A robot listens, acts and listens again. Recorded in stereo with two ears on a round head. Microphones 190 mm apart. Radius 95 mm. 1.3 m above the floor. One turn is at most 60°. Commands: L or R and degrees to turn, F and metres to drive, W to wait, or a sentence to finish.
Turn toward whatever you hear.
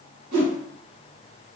R55
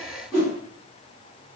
Facing the whoosh, 1 to 2 m away.